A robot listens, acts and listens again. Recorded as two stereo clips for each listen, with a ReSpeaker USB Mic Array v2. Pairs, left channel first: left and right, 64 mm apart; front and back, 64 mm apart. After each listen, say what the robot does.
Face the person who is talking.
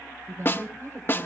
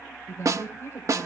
Turn 50° right.
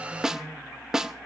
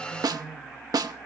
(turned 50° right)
Keep listening.
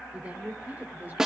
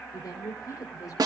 Turn 25° right.
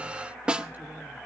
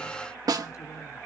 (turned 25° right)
Keep listening.
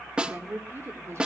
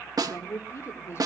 Turn 45° right.
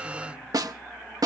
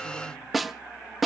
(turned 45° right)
Keep listening.
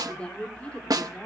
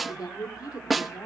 Turn 20° left.
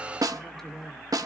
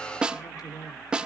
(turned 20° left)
Found it: a woman speaking, straight ahead.